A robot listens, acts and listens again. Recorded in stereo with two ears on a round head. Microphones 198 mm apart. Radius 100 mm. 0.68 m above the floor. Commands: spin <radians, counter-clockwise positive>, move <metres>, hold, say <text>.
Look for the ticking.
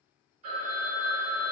hold
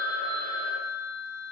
hold
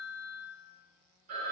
say I can't make out ticking to turn to.